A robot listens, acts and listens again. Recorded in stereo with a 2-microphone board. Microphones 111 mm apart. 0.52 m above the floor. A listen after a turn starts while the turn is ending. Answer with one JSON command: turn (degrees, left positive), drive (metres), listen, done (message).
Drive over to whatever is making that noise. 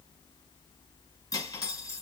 {"turn": 35}
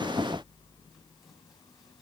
{"listen": true}
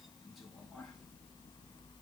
{"listen": true}
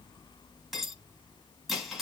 {"drive": 1.0}
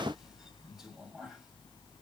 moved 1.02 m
{"drive": 1.0}
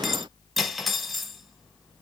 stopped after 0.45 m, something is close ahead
{"done": "Arrived at the cutlery clinking, straight ahead."}